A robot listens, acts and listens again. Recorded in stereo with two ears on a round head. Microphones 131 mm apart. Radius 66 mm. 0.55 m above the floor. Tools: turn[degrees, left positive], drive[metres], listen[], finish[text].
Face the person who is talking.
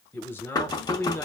Action: turn[30]
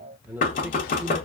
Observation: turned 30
Thought: So it is at 15° right.
Action: turn[-15]
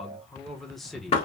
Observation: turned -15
Action: finish[Facing the man speaking, 1 to 2 m away.]